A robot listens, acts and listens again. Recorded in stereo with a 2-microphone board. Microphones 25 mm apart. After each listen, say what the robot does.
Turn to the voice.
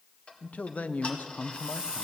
Turn 90° left.
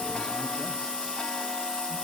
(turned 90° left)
Keep listening.
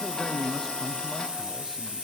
Found it: a man speaking, straight ahead, under 1 m away.